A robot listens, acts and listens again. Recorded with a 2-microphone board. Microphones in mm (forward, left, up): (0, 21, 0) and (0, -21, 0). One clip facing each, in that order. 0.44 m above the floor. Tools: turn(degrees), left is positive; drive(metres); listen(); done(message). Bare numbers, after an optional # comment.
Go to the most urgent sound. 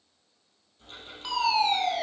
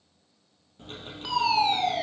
turn(30)
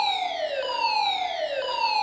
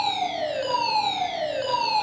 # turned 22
# So it is at 160° left.
turn(160)
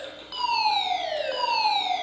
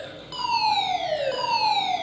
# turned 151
drive(1.0)
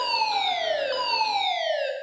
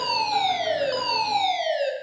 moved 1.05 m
# The fire alarm is now 10° left.
turn(10)
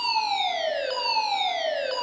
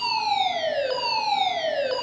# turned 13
drive(1.0)
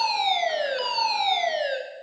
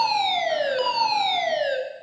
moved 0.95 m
drive(1.0)
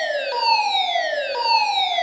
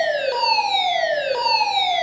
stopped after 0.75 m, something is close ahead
done("Arrived at the fire alarm, straight ahead.")